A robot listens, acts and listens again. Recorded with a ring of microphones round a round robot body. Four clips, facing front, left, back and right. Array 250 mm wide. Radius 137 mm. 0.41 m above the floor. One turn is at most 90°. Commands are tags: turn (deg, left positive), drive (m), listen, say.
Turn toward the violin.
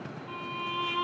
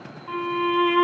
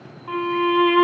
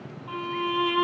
<turn deg="90"/>
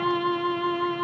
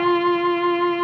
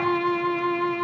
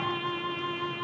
<turn deg="90"/>
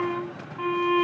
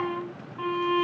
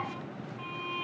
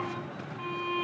<turn deg="30"/>
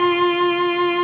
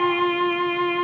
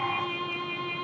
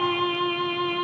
<turn deg="15"/>
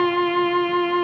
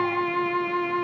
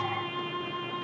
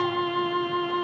<say>Facing the violin.</say>